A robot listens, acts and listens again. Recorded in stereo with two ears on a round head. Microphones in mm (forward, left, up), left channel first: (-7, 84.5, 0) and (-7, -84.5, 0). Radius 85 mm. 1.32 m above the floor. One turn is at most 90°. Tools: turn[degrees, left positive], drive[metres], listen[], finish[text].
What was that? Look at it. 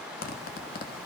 Thought: The zipper: about 50° left or 130° left.
Action: turn[50]
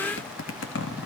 Thought: So it is at 75° left.
Action: turn[75]
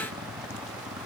Thought: The zipper is now 20° right.
Action: turn[-20]
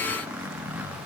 Thought: The zipper is now 10° right.
Action: turn[-10]
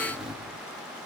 Action: finish[Facing the zipper, 2 to 4 m away.]